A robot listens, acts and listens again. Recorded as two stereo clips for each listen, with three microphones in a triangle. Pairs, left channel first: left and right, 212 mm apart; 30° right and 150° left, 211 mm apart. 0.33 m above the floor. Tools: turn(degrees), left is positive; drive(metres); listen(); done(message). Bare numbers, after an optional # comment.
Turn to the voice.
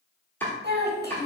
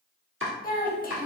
# The child speaking: 70° right.
turn(-70)
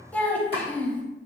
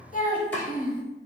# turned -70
# The child speaking is now 10° left.
turn(10)
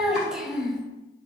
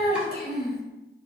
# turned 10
done("Found it: a child speaking, straight ahead, under 1 m away.")